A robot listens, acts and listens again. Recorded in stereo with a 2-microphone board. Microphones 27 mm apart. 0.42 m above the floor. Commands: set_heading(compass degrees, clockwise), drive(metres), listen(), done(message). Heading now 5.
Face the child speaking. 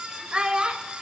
set_heading(40)
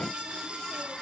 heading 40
listen()
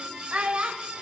set_heading(150)
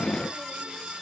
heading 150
listen()
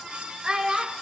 set_heading(180)
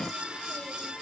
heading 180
listen()
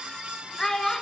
set_heading(160)
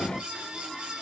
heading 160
listen()
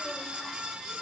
listen()
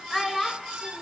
done("Found it: a child speaking, straight ahead.")